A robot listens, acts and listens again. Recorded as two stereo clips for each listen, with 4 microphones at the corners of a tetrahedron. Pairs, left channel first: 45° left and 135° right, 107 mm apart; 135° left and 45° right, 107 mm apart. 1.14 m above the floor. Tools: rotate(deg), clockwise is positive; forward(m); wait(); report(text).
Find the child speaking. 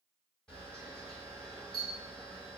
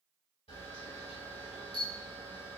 wait()
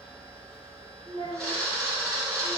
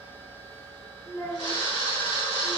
rotate(-95)
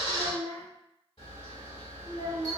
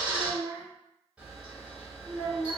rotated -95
report("Found it: a child speaking, straight ahead.")